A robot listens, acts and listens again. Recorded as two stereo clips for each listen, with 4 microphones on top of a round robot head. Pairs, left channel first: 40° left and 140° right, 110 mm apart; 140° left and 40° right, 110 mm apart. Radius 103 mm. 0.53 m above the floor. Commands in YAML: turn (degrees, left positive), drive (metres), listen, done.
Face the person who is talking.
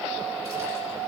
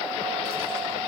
listen: true
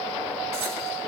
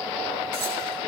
listen: true
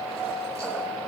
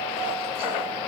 done: "I can't make out anyone speaking."